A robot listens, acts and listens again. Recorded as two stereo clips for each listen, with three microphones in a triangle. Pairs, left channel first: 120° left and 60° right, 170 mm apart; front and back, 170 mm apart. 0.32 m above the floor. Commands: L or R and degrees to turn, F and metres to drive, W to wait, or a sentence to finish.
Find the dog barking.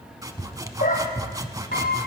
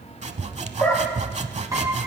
L85
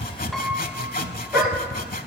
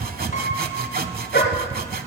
L30
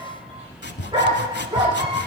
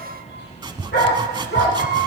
L10
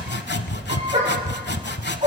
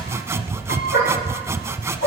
Facing the dog barking.